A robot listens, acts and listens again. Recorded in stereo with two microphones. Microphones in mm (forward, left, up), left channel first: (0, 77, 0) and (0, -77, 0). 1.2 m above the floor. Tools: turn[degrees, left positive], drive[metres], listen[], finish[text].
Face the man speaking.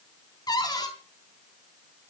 Action: listen[]
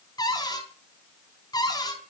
Action: listen[]
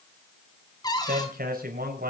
Thought: The man speaking: about 75° right or 105° right.
Action: turn[-75]
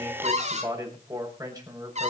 Thought: So it is at 25° right.
Action: turn[-25]
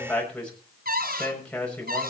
Action: finish[Facing the man speaking.]